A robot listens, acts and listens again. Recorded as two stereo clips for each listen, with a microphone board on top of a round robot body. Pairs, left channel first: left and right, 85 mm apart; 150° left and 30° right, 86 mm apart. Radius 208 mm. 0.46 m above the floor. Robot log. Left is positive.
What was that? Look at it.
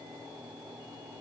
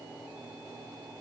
cmd idle
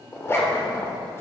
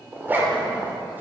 note: The zipper: 35° left.
cmd yaw +35
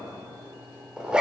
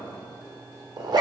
note: The zipper is now 10° right.
cmd yaw -10
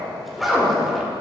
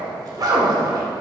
end: Facing the zipper, 2 to 4 m away.